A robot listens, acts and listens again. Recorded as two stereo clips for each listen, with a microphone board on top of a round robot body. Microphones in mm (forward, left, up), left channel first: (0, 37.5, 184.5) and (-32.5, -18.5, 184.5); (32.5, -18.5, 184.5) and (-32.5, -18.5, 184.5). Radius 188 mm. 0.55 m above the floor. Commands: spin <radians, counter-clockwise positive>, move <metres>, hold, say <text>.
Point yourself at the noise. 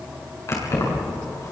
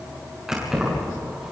spin 1.75
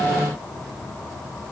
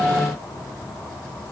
hold
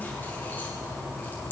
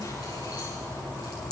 say Found it: keys jangling, straight ahead.